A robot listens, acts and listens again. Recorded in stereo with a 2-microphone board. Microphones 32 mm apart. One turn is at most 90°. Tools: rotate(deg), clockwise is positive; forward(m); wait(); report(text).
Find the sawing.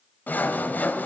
rotate(-60)
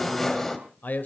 rotate(-10)
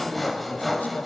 report("Found it: sawing, straight ahead, 2 to 4 m away.")